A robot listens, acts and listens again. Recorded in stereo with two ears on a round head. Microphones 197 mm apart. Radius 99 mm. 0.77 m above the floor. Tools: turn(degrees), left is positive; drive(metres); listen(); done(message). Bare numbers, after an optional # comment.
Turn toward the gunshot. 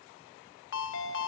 listen()
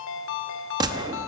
# The gunshot: about 20° right or 160° right.
turn(-20)
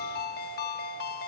listen()
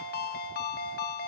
done("I heard a gunshot, but can't make it out now. It was about straight ahead or 140° right.")